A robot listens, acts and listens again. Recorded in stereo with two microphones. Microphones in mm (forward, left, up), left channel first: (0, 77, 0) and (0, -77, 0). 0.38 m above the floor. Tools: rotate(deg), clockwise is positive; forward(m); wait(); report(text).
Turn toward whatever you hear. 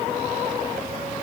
wait()
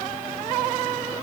wait()
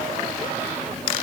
report("I can't make out anything.")